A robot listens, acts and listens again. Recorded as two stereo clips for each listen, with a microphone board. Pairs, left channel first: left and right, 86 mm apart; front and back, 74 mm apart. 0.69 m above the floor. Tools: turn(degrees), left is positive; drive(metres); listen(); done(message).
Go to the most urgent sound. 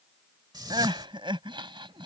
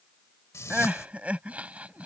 turn(degrees=-110)
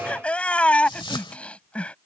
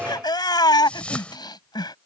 turn(degrees=15)
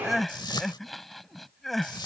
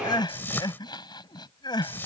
drive(metres=1.0)
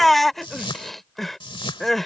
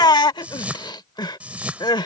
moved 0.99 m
drive(metres=1.0)
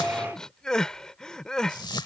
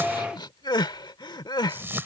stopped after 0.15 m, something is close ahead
turn(degrees=10)
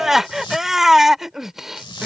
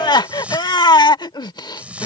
done("I am next to the crying.")